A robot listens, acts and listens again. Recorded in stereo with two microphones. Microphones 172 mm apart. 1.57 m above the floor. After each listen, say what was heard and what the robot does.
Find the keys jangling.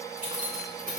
The keys jangling: about 55° right or 125° right. Turn 55° right.
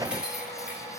Found it: keys jangling, straight ahead, 2 to 4 m away.